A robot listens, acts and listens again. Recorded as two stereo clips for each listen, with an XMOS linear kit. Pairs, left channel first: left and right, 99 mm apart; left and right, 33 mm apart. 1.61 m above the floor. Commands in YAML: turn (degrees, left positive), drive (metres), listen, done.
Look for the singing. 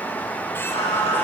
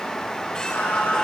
turn: 90
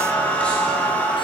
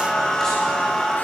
turn: 10
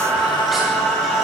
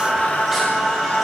done: "Found it: singing, straight ahead."